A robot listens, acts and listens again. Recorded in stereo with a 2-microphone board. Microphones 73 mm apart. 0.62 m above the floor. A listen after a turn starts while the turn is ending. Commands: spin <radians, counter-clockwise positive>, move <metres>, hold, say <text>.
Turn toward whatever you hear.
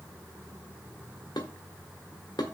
spin 1.22
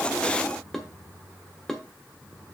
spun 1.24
say Facing the dishes clattering, 1 to 2 m away.